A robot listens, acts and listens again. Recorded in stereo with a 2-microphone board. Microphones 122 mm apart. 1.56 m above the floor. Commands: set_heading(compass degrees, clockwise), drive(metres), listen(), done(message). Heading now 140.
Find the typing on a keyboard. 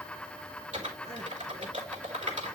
set_heading(230)
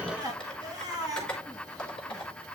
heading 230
done("Facing the typing on a keyboard, 2 to 4 m away.")